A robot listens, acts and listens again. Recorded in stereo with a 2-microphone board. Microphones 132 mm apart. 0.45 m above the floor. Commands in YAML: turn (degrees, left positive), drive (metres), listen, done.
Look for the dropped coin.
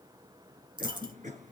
turn: -35
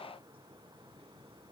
listen: true
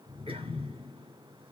done: "I heard a dropped coin, but can't make it out now. It was about straight ahead or 110° right."